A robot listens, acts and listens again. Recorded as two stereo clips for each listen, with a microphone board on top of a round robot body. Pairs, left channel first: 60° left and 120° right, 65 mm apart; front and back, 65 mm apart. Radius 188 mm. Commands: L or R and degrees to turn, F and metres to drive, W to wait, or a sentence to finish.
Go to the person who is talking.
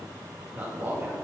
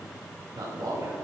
L180
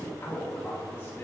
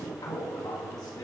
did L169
L10
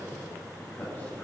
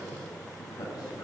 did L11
W
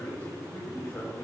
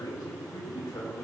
F1.0
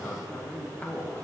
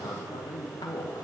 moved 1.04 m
F1.0
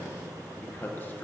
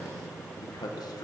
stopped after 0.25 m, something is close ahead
Arrived at the man speaking, straight ahead.